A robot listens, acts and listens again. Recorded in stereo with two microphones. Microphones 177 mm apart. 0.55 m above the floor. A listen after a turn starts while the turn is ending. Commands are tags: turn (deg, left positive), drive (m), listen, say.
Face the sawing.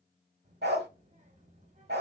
<listen/>
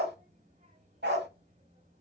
<listen/>
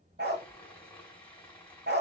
<turn deg="30"/>
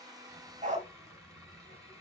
<listen/>
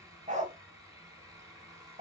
<turn deg="-20"/>
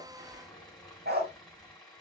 <say>Facing the sawing.</say>